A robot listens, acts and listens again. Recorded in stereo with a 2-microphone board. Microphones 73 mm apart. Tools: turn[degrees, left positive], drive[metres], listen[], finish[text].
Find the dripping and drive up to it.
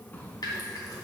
Action: listen[]
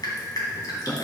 Thought: The dripping: about 65° left or 115° left.
Action: turn[65]
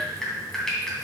Thought: So it is at 10° left.
Action: turn[10]
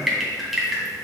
Action: drive[1.0]
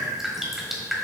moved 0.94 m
Action: drive[1.0]
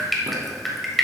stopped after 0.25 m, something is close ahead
Action: finish[I am next to the dripping.]